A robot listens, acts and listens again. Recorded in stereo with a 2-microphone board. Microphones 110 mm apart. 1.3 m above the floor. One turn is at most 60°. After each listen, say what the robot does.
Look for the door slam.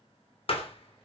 Turn 60° left.
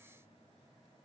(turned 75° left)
Keep listening.
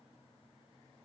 I heard a door slam, but can't make it out now. It was about 15° right or 45° left.